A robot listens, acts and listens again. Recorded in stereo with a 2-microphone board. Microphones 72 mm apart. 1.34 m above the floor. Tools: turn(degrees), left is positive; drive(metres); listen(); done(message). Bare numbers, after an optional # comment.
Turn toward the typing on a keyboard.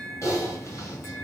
# The typing on a keyboard: about 45° left or 135° left.
turn(45)
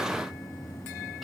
done("Facing the typing on a keyboard.")